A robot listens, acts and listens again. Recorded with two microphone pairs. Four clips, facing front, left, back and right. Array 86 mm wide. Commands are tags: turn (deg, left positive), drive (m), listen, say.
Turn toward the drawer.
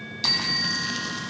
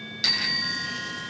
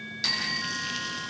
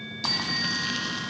<listen/>
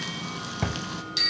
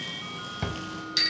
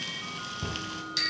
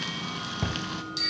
<turn deg="15"/>
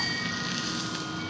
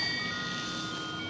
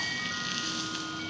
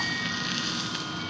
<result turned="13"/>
<listen/>
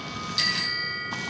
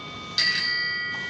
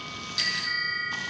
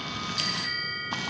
<listen/>
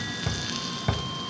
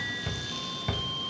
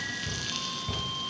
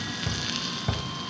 <say>Facing the drawer, 1 to 2 m away.</say>